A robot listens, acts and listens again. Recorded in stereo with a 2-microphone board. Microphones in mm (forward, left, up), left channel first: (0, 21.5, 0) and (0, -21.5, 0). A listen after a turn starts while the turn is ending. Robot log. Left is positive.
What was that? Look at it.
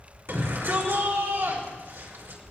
note: The shout: about 75° right or 105° right.
cmd yaw -75
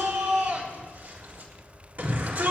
note: So it is at 35° right.
cmd yaw -35
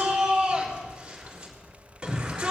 note: The shout is now 20° right.
cmd yaw -20
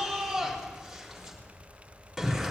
end: Facing the shout, over 4 m away.